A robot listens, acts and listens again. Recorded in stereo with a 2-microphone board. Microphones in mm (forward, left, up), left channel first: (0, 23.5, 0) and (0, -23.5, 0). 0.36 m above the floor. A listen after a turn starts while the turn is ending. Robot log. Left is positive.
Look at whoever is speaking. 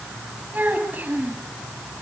note: The child speaking: about 35° right or 145° right.
cmd yaw -35
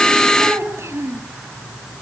note: So it is at 110° right.
cmd yaw -110
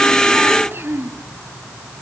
note: The child speaking is now 60° right.
cmd yaw -60
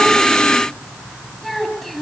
end: Found it: a child speaking, straight ahead.